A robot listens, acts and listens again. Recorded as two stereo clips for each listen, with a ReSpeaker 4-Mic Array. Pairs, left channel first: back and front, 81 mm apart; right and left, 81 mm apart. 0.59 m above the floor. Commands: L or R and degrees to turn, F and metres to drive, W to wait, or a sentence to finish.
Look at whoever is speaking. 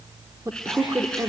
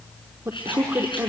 L40
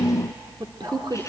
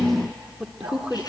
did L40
L10
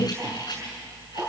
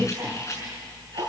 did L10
W
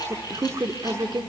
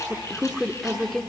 Found it: a man speaking, straight ahead, 1 to 2 m away.